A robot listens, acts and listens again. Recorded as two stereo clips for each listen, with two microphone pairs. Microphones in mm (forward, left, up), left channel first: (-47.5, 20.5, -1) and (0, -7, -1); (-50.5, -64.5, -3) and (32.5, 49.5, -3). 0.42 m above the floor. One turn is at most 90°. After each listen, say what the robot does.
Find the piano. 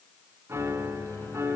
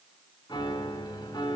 Turn 70° right.
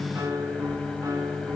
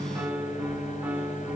Turn 25° right.
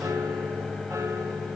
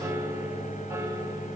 Keep listening.
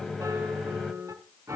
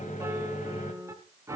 Turn 15° right.
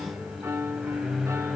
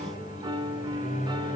Found it: a piano, straight ahead.